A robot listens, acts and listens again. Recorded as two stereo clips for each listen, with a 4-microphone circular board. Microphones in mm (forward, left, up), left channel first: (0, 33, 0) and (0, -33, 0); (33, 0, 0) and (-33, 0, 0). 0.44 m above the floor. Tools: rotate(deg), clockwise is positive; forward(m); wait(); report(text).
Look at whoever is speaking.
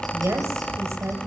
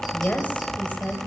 rotate(60)
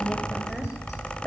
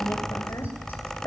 report("Found it: a woman speaking, straight ahead.")